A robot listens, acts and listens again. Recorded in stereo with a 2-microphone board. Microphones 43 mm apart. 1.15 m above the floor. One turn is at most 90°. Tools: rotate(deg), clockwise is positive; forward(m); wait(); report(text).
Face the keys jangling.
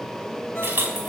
rotate(55)
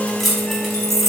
report("Facing the keys jangling, over 4 m away.")